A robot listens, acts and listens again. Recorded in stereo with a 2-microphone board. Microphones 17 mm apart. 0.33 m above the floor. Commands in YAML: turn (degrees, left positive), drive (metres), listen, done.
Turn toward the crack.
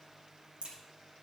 turn: -55
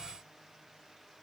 listen: true
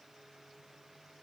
done: "I heard a crack, but can't make it out now. It was about straight ahead or 70° right."